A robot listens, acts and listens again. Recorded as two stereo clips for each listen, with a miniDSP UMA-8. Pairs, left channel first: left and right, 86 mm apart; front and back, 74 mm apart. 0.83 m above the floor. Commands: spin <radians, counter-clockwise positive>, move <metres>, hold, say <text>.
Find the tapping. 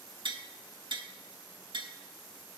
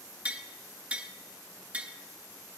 spin -1.92
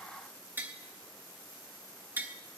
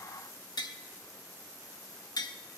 spin -0.44
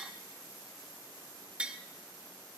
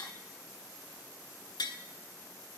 spin -0.26
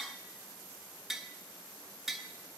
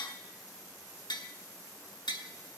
say Found it: tapping, straight ahead, 1 to 2 m away.